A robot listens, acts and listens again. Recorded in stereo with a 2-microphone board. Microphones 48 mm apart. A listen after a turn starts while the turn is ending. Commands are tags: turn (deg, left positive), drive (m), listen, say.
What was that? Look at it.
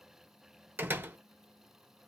<turn deg="-40"/>
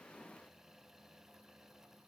<listen/>
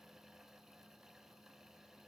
<say>I heard a door slam, but can't make it out now. It was about straight ahead or 100° right.</say>